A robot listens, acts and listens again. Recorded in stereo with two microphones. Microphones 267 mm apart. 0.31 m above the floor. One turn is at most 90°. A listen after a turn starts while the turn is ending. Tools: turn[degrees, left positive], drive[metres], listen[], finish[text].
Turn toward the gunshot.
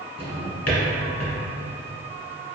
Action: listen[]
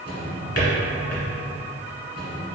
Action: listen[]
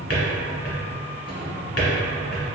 Action: finish[I can't make out a gunshot, only a drawer.]